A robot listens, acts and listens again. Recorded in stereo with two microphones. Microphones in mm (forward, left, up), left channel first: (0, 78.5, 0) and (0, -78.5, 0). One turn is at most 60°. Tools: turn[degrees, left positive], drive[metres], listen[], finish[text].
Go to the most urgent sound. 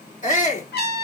Thought: The shout: about 50° left or 130° left.
Action: turn[50]
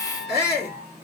Thought: So it is at 80° left.
Action: turn[60]
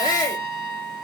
Thought: The shout is now 25° left.
Action: turn[25]
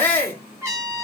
Thought: The shout is now 10° left.
Action: turn[10]
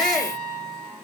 Action: drive[1.0]
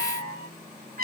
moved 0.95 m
Action: listen[]
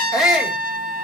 Action: drive[1.0]
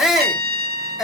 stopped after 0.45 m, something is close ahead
Action: finish[Arrived at the shout, straight ahead.]